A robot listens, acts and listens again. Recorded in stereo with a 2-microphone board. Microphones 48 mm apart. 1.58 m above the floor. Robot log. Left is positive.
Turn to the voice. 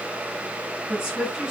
cmd yaw -30
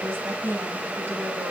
note: So it is at 140° right.
cmd yaw -140
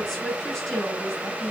end: Found it: a woman speaking, straight ahead.